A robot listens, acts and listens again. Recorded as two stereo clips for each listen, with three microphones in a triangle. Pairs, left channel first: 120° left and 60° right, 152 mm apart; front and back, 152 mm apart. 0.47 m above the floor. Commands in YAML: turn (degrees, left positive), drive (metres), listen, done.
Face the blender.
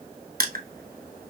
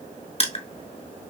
listen: true
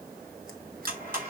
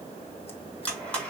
turn: -80
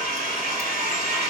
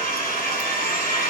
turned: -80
turn: -20
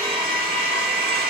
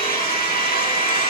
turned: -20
done: "Found it: a blender, straight ahead."